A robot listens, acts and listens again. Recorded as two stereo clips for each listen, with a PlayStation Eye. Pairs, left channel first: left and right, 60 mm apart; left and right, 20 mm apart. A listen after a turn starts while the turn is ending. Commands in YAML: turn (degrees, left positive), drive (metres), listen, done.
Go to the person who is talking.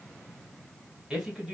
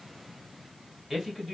turn: -30
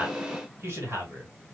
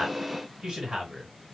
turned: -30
turn: -135
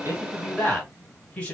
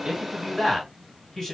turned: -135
turn: 20
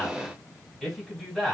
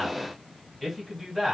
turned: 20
drive: 1.0
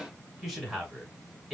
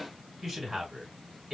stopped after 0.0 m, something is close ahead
done: "Blocked. The man speaking is further on, straight ahead."